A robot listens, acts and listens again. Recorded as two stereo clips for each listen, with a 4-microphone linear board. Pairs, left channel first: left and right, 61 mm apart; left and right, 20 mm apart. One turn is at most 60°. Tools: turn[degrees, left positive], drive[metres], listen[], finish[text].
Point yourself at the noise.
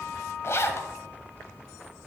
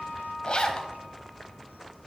Thought: The zipper: about 45° left or 135° left.
Action: turn[45]
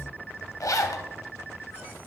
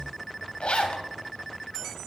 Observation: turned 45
Thought: So it is at 85° left.
Action: turn[60]
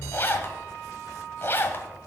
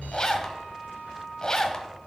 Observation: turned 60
Thought: The zipper is now 40° left.
Action: turn[40]
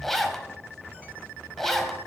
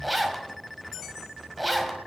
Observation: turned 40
Action: finish[Facing the zipper.]